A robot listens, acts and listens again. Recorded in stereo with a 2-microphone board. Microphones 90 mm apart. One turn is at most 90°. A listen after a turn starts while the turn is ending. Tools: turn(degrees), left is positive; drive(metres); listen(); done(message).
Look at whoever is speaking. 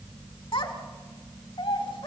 turn(degrees=65)
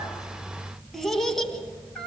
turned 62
done("Found it: a child speaking, straight ahead.")